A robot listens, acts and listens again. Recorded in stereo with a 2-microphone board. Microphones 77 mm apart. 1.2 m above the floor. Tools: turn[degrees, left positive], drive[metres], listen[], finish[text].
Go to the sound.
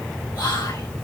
Thought: The whispering: about 65° left or 115° left.
Action: turn[65]
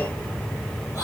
Thought: So it is at 45° left.
Action: turn[45]
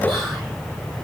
Action: drive[1.0]
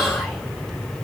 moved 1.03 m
Action: listen[]
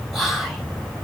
Action: drive[1.0]
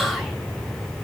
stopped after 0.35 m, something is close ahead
Action: finish[I am next to the whispering.]